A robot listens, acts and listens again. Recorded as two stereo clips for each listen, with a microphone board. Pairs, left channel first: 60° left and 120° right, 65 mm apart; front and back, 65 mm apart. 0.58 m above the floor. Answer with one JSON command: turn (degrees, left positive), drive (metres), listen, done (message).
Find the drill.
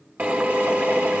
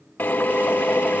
{"turn": -60}
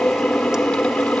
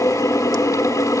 {"turn": -20}
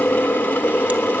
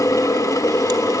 {"done": "Found it: a drill, straight ahead."}